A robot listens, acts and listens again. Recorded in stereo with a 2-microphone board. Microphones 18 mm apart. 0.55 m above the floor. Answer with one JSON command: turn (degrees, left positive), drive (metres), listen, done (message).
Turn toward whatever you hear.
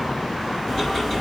{"turn": 30}
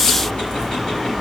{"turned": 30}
{"turn": 120}
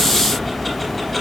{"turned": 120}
{"done": "Found it: ticking, straight ahead, 2 to 4 m away."}